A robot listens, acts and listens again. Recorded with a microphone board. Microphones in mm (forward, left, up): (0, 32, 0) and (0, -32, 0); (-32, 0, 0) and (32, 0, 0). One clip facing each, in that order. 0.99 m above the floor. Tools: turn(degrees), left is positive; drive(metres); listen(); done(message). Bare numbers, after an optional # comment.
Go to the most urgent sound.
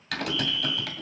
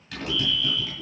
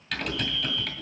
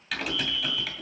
# The fire alarm: 155° left.
turn(155)
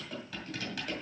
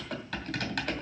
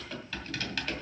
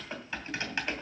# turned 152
listen()
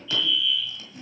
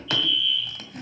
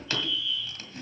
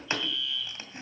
drive(1.0)
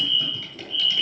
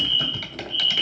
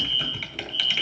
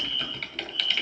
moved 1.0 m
drive(1.0)
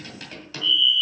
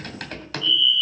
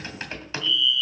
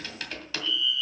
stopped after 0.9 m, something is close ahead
done("Arrived at the fire alarm, straight ahead.")